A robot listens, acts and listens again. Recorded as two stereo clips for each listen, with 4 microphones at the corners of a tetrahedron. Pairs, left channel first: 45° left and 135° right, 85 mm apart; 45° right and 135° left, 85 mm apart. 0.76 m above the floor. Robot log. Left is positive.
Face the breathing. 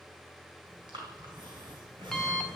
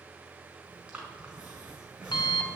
note: The breathing: 150° right.
cmd yaw -150
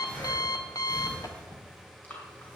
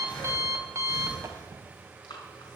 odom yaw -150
note: The breathing is now 25° right.
cmd yaw -25
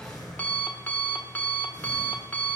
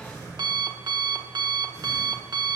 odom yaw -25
end: Found it: breathing, straight ahead, over 4 m away.